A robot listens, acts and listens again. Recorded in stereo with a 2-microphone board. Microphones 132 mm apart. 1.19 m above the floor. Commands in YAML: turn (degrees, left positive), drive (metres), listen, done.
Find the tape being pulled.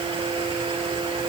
listen: true
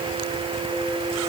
listen: true
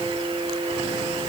done: "I can't make out tape being pulled to turn to."